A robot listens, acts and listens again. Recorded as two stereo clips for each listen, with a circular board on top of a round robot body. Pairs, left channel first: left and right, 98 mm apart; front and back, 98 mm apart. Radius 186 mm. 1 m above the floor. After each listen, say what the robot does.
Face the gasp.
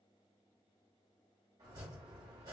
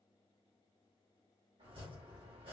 Keep listening.
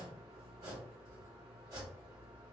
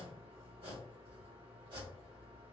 Keep listening.
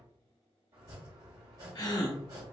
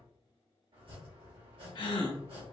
Turn 40° left.
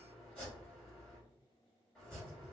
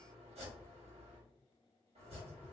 Facing where the gasp came from. I can't hear it now.